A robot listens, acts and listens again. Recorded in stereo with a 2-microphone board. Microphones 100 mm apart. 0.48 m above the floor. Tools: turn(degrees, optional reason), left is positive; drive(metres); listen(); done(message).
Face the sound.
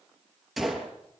turn(degrees=-30)
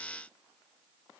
listen()
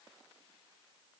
done("I heard a gunshot, but can't make it out now. It was about 25° left or 145° right.")